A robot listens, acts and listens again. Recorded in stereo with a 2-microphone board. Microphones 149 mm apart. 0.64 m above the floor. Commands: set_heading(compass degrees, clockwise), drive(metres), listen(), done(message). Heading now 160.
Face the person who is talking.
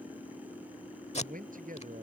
set_heading(230)
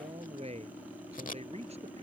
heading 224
set_heading(269)
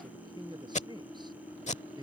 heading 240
set_heading(270)
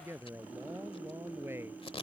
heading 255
set_heading(270)
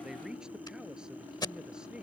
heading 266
done("Found it: a man speaking, straight ahead.")